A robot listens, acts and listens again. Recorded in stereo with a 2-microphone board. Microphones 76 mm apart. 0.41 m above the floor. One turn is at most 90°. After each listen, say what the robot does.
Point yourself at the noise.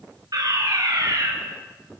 Turn 55° right.
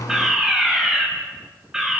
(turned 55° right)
Turn 10° right.
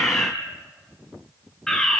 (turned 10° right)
Found it: a fire alarm, straight ahead.